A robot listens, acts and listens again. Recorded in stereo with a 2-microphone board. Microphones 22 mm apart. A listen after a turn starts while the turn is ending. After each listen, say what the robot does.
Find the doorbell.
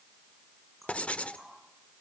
Keep listening.
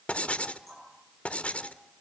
Keep listening.
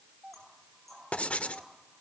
Turn 30° right.
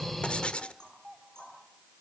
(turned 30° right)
Facing the doorbell, 2 to 4 m away.